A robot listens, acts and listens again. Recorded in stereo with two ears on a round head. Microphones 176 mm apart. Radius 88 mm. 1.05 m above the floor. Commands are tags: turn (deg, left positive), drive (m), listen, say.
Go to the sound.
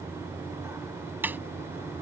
<turn deg="-30"/>
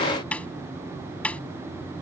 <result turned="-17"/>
<drive m="1.0"/>
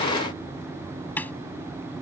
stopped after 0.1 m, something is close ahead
<turn deg="10"/>
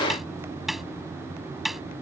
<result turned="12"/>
<say>Blocked. The snare drum is further on, straight ahead.</say>